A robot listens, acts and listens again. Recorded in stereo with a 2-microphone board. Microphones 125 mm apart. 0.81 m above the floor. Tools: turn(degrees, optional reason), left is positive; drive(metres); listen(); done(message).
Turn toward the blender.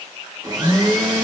turn(degrees=-35, reason="The blender: about 35° right or 145° right.")
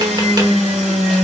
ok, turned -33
turn(degrees=-115, reason="So it is at 115° right.")
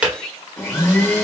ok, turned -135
turn(degrees=20, reason="The blender is now 20° left.")
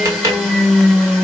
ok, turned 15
done("Found it: a blender, straight ahead.")